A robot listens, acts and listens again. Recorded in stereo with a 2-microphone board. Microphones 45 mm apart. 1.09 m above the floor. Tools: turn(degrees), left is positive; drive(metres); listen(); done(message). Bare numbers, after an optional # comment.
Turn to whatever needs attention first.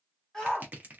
turn(30)
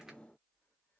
listen()
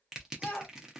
# So it is at 140° left.
turn(140)
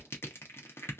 listen()
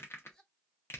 listen()
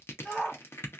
# The shout is now 20° left.
turn(20)
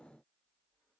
listen()
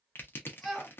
done("Facing the shout, 1 to 2 m away.")